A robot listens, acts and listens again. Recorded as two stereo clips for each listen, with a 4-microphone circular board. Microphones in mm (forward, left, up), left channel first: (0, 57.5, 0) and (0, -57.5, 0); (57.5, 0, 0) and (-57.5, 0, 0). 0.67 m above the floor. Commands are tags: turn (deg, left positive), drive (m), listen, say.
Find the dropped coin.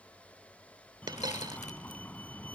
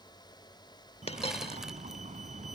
<turn deg="-35"/>
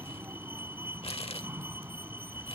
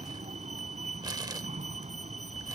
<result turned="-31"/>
<say>I heard a dropped coin from this way, but can't make it out now.</say>